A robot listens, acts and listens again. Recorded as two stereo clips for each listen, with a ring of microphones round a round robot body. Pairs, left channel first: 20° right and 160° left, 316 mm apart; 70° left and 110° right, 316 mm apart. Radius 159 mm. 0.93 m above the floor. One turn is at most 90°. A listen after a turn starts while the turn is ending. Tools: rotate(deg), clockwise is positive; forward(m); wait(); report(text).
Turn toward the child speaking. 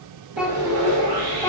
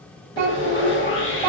rotate(90)
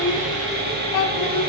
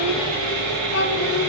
rotate(-15)
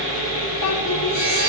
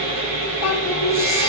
rotate(-30)
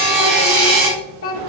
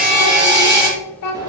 rotate(-30)
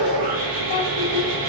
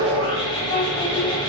rotate(-10)
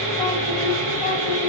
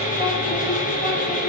wait()
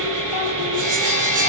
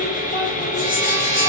wait()
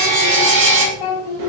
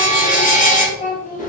report("Facing the child speaking.")